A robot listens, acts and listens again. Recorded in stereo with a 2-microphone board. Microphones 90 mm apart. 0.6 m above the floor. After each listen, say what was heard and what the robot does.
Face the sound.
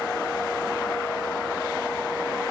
Keep listening.
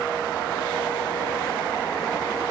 Keep listening.
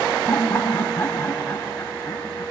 The laughter: about 25° left or 155° left. Turn 25° left.
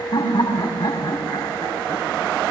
So it is at 130° left. Turn 130° left.
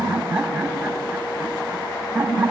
The laughter is now 15° right. Turn 15° right.
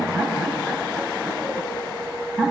Found it: laughter, straight ahead.